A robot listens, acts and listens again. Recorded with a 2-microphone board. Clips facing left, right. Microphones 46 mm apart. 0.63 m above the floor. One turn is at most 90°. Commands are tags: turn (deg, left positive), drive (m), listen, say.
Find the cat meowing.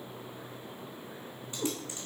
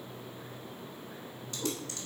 <turn deg="90"/>
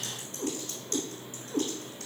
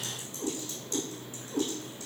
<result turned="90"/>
<turn deg="40"/>
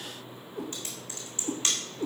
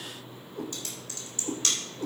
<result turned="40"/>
<turn deg="30"/>
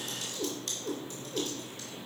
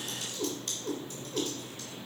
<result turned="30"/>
<say>Found it: a cat meowing, straight ahead, 2 to 4 m away.</say>